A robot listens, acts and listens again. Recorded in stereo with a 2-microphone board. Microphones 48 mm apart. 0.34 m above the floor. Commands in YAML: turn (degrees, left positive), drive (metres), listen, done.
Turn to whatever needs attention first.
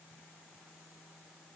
listen: true
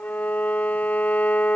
listen: true
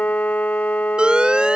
turn: -20
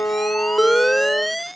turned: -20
done: "Found it: an alarm, straight ahead."